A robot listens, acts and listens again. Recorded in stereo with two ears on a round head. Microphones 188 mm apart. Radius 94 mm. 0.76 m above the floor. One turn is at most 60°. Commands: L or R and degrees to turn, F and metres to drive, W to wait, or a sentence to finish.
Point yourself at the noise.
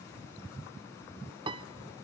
R25
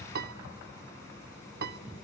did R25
R60
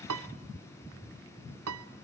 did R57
R60
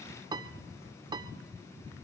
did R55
R20
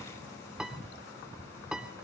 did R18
Facing the piano.